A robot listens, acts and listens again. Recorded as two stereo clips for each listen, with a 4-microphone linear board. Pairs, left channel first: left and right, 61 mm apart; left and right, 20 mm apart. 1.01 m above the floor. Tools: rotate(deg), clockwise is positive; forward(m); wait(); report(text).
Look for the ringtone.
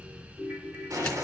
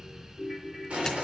rotate(25)
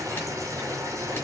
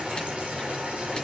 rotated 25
wait()
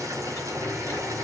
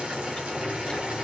wait()
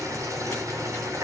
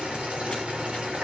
report("I heard a ringtone, but can't make it out now. It was about straight ahead or 130° right.")